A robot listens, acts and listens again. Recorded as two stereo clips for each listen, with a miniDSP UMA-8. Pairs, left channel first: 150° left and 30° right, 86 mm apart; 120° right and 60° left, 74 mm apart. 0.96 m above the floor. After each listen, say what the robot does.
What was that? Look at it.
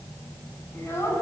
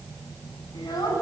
Turn 150° right.
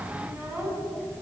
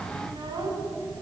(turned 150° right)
Turn 40° left.
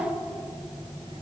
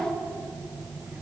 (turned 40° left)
Found it: a child speaking, straight ahead, over 4 m away.